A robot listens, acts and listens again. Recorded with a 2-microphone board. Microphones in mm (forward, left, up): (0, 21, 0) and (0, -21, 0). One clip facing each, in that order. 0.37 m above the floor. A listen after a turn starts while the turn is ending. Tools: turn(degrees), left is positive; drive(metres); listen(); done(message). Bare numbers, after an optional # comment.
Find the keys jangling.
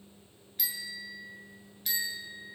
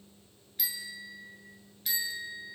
listen()
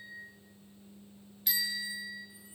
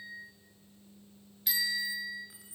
# The keys jangling: about 75° right or 105° right.
turn(-75)
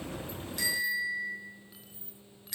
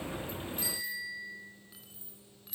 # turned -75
done("Facing the keys jangling, 2 to 4 m away.")